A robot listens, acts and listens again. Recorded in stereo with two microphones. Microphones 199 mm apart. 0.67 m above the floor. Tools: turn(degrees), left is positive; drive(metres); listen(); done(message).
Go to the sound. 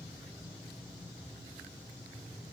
listen()
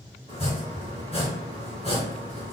turn(degrees=30)
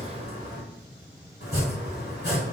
turn(degrees=120)
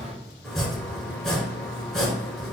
drive(metres=1.0)
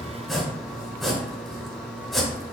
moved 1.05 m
drive(metres=1.0)
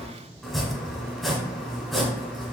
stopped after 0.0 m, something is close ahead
done("Arrived at the chopping, straight ahead.")